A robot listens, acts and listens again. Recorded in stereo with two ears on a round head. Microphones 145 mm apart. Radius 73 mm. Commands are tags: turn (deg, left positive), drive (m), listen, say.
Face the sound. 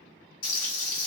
<turn deg="50"/>
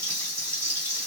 <turn deg="15"/>
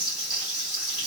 <say>Found it: frying, straight ahead.</say>